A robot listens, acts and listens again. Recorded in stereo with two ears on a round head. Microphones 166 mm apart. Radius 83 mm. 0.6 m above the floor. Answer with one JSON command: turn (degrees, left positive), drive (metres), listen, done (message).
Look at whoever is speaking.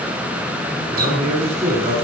{"turn": -35}
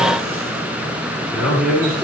{"done": "Found it: a man speaking, straight ahead, over 4 m away."}